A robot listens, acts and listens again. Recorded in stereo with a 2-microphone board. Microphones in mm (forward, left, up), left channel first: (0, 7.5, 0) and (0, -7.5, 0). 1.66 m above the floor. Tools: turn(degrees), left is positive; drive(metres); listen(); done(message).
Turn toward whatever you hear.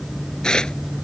turn(degrees=75)
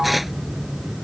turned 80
listen()
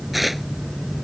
done("Facing the tearing paper.")